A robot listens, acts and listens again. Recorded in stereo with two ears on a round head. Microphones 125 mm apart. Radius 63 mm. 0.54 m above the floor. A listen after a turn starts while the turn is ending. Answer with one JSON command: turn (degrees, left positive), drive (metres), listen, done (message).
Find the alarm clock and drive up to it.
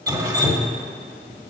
{"turn": 60}
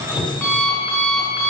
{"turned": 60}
{"drive": 1.0}
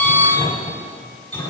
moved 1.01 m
{"turn": 10}
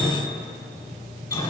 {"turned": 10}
{"drive": 1.0}
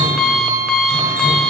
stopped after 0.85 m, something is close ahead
{"done": "I am next to the alarm clock."}